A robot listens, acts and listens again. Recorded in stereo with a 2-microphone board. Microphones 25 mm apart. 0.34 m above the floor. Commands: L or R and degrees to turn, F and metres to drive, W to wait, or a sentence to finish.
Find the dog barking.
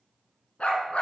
L55
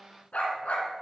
L65
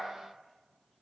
W
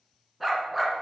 Found it: a dog barking, straight ahead.